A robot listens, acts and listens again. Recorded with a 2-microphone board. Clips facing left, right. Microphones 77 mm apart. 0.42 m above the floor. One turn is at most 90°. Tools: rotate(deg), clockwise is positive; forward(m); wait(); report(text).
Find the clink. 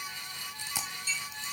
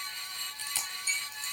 rotate(-65)
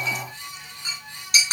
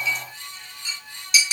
rotate(-45)
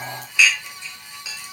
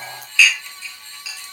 rotate(-20)
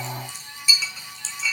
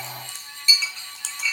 report("Facing the clink.")